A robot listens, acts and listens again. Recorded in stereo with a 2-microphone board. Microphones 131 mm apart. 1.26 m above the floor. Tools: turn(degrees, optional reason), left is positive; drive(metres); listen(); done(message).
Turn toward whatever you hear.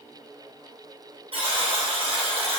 turn(degrees=-45, reason="The buzzer: about 45° right or 135° right.")
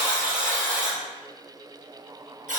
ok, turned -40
turn(degrees=-95, reason="So it is at 95° right.")
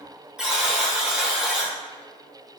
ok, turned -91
done("Facing the buzzer.")